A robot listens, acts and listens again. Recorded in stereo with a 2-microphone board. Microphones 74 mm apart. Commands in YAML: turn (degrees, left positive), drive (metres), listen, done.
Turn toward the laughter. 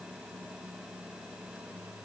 listen: true
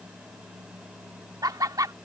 turn: -55
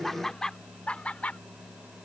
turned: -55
turn: 20
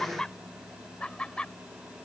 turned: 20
turn: 15
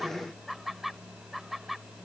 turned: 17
done: "Found it: laughter, straight ahead."